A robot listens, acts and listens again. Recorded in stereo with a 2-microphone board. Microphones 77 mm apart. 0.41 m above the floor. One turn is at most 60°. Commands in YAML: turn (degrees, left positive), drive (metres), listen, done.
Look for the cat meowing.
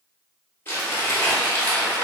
listen: true
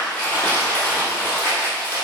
listen: true
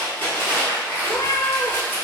turn: 50
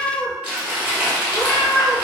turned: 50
turn: 20
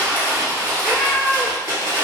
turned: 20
done: "Found it: a cat meowing, straight ahead, under 1 m away."